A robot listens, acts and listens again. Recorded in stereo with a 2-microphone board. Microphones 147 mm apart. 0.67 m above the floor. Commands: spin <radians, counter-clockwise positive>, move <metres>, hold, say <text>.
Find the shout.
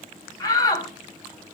spin 0.44
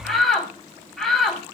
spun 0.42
say Facing the shout, 2 to 4 m away.